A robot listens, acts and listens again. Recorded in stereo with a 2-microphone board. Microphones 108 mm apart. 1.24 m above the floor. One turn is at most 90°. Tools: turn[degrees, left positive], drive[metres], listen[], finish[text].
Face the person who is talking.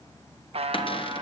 Action: listen[]
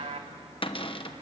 Action: listen[]
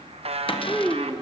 Action: turn[30]
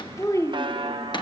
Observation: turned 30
Thought: So it is at 145° left.
Action: turn[90]
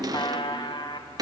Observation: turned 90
Thought: Nothing new. It was at 55° left.
Action: turn[55]
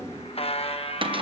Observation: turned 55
Action: listen[]
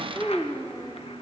Thought: The child speaking is now 15° left.
Action: turn[15]
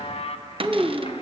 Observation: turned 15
Action: finish[Found it: a child speaking, straight ahead.]